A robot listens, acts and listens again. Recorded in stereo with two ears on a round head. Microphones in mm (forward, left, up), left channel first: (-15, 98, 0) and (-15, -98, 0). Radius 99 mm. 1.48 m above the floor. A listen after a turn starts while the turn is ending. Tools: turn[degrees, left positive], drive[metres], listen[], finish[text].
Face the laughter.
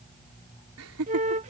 Thought: The laughter: about 70° right or 110° right.
Action: turn[-70]
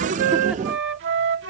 Action: listen[]
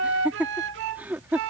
Thought: So it is at 10° right.
Action: turn[-10]
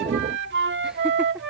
Action: listen[]
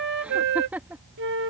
Thought: The laughter is now 10° right.
Action: turn[-10]
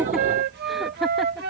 Action: listen[]
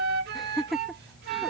Action: finish[Found it: laughter, straight ahead.]